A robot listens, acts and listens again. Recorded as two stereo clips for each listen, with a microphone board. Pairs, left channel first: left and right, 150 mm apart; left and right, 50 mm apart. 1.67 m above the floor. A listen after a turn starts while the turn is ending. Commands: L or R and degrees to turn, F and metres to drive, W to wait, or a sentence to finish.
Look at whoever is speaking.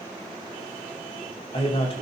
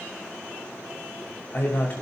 L40
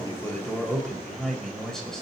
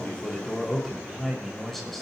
Found it: a man speaking, straight ahead, over 4 m away.